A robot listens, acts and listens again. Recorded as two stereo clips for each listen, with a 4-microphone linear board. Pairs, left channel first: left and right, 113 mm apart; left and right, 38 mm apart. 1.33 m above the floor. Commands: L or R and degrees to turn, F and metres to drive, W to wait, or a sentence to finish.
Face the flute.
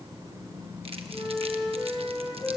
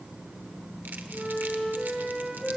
L30
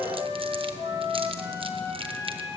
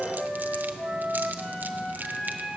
L145
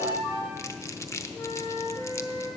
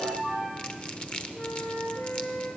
L45
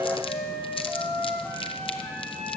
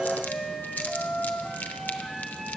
L10
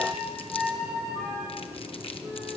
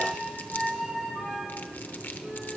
Found it: a flute, straight ahead, over 4 m away.